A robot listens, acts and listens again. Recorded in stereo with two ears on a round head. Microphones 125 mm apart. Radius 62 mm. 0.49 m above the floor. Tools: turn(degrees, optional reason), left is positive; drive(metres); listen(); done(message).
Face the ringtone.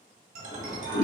turn(degrees=-60, reason="The ringtone: about 60° right or 120° right.")
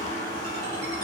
listen()
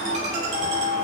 turn(degrees=-60, reason="So it is at 60° right.")
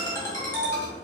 turn(degrees=20, reason="The ringtone is now 20° left.")
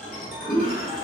done("Facing the ringtone.")